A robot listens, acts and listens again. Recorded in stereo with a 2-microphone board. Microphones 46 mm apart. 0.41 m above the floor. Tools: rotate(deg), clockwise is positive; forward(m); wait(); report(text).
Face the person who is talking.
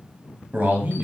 rotate(45)
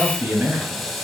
rotate(80)
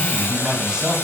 rotate(15)
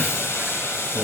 wait()
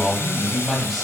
report("Found it: a man speaking, straight ahead.")